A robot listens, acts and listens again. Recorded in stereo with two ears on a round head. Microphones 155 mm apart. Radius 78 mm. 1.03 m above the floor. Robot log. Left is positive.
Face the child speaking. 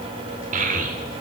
note: The child speaking: about 50° right or 130° right.
cmd yaw -50
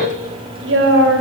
note: So it is at 75° right.
cmd yaw -75
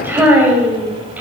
note: The child speaking is now 10° right.
cmd yaw -10
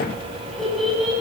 end: Found it: a child speaking, straight ahead.